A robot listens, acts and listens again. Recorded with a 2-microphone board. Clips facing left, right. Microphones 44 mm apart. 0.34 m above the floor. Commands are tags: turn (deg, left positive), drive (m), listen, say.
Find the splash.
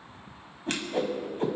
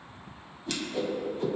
<listen/>
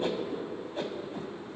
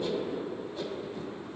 <listen/>
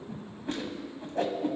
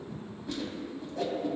<say>I can't make out a splash to turn to.</say>